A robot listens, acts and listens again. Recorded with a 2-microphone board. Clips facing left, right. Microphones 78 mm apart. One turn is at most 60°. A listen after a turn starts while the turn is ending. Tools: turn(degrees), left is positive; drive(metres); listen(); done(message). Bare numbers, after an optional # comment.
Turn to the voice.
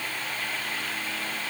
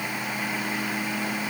listen()
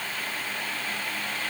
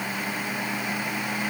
listen()
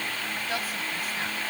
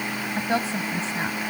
# The woman speaking: about 30° right or 150° right.
turn(-30)
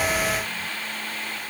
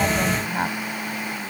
# So it is at 120° right.
turn(-60)
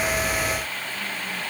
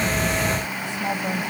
# The woman speaking is now 80° right.
turn(-60)
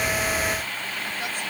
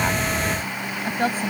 # The woman speaking is now 40° right.
turn(-40)
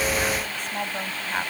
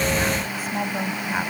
done("Facing the woman speaking.")